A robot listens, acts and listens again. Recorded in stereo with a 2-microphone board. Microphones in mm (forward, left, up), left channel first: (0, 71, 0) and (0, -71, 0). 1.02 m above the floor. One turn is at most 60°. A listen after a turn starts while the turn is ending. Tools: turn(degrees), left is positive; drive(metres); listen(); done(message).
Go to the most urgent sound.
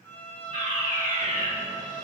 turn(degrees=55)
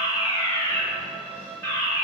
turn(degrees=20)
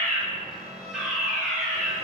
drive(metres=1.0)
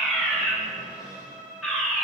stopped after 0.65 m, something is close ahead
done("I am next to the fire alarm.")